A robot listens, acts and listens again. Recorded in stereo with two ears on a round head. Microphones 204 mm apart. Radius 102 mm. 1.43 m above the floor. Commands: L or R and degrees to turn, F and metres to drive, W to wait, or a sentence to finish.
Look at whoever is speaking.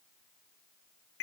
W
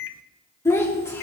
L30
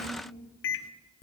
L135
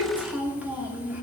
Found it: a child speaking, straight ahead.